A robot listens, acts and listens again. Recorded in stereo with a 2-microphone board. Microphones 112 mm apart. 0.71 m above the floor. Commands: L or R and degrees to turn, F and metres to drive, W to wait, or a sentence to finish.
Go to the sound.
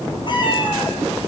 L40
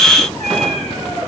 F1.0
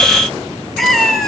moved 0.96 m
F1.0
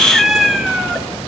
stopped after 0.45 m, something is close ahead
Arrived at the cat meowing, straight ahead.